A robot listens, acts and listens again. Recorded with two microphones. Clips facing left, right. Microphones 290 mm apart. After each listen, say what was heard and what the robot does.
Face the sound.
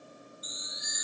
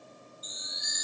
The chime: about 50° right or 130° right. Turn 50° right.
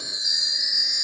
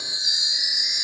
So it is at 80° right. Turn 80° right.
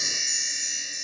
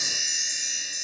Found it: a chime, straight ahead.